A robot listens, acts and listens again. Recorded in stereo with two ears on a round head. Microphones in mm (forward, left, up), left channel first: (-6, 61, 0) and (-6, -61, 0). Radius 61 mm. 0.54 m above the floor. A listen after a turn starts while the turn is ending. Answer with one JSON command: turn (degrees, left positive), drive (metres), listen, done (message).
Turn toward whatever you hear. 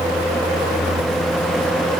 {"listen": true}
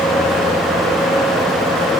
{"listen": true}
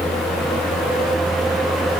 {"done": "I can't make out anything."}